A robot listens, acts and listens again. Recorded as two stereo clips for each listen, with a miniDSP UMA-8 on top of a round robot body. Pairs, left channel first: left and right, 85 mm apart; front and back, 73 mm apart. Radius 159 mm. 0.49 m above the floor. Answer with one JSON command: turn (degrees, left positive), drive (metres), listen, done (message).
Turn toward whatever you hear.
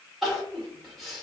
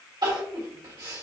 {"turn": 180}
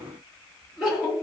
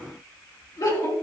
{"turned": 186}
{"done": "Facing the crying."}